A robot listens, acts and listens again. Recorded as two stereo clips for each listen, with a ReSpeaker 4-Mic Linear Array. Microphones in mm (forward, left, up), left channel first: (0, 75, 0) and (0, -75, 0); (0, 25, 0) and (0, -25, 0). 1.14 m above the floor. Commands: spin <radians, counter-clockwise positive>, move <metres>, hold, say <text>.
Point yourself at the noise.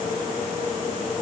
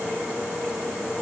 hold
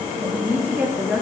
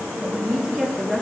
spin -0.52
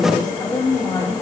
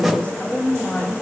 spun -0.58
spin 0.61
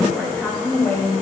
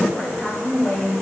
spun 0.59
spin 0.35
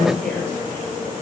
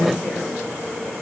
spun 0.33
hold
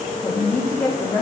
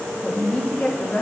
spin 0.26
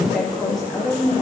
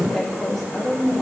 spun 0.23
say Facing the woman speaking, 1 to 2 m away.